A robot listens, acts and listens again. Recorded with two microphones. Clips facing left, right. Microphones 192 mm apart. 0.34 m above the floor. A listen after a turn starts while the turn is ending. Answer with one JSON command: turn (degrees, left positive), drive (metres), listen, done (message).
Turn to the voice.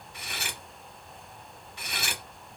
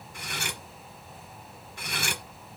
{"listen": true}
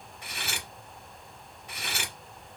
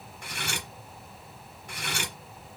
{"listen": true}
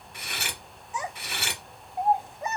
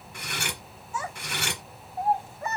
{"turn": 20}
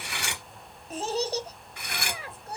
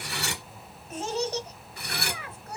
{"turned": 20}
{"turn": 140}
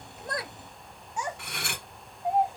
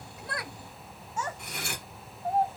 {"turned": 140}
{"turn": 15}
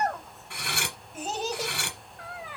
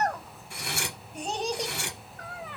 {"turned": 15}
{"done": "Facing the child speaking."}